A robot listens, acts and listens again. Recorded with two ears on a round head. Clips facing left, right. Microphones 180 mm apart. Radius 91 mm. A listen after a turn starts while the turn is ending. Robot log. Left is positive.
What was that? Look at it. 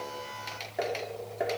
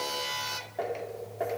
note: The tapping: about 25° left or 155° left.
cmd yaw +25
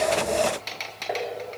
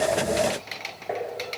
end: Facing the tapping.